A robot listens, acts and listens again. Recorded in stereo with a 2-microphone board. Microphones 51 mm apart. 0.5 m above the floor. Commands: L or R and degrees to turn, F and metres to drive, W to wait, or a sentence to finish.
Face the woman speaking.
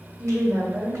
R40
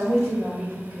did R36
R15
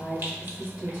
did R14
Found it: a woman speaking, straight ahead, 2 to 4 m away.